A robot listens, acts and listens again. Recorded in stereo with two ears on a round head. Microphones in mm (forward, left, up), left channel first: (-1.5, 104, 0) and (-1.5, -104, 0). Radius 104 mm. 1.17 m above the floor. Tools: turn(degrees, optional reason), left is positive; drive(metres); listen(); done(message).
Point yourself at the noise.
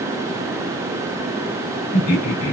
turn(degrees=65, reason="The laughter: about 65° left or 115° left.")
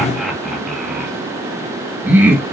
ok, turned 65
turn(degrees=-10, reason="So it is at 10° right.")
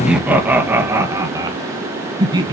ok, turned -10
turn(degrees=-20, reason="The laughter is now 20° right.")
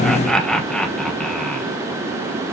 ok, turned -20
done("Facing the laughter, 1 to 2 m away.")